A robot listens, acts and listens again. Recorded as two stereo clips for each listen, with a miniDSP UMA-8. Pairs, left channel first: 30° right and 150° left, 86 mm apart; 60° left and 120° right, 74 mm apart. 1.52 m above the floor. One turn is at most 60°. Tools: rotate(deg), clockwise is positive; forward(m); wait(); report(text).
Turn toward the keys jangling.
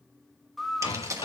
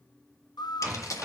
rotate(-60)
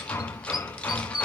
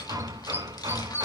rotate(-40)
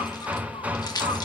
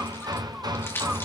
report("Found it: keys jangling, straight ahead, 1 to 2 m away.")